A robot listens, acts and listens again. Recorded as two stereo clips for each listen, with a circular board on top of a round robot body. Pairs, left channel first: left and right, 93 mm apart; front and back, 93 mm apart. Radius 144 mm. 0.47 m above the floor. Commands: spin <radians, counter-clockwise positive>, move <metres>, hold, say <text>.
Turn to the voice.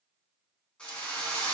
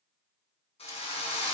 hold
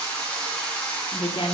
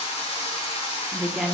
spin 1.66
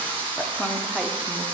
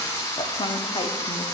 hold
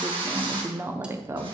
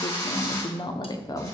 spin -0.70
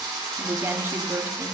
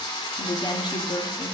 spin -0.52
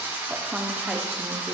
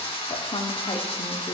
hold
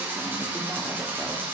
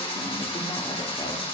hold
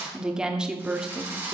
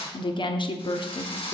spin -0.17
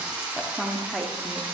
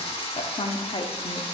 say Facing the woman speaking.